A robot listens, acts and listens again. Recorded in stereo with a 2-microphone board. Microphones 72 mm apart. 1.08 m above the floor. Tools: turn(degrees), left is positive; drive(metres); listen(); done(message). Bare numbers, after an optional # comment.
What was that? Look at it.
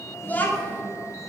# The child speaking: about 20° left or 160° left.
turn(20)
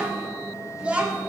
# So it is at 20° right.
turn(-20)
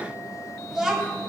# The child speaking is now 10° right.
turn(-10)
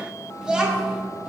# The child speaking is now 15° right.
turn(-15)
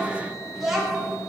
done("Found it: a child speaking, straight ahead, 2 to 4 m away.")